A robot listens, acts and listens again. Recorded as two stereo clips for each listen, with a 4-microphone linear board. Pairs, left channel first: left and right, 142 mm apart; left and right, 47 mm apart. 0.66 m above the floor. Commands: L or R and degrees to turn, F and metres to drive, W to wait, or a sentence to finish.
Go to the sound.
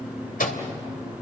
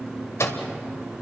L75
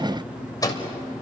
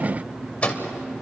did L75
L25
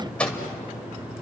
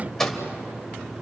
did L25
F1.0
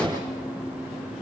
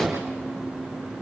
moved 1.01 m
W
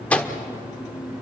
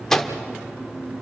L10
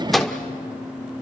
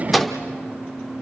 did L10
F1.0
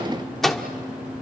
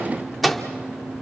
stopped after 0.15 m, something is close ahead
Arrived at the microwave, straight ahead.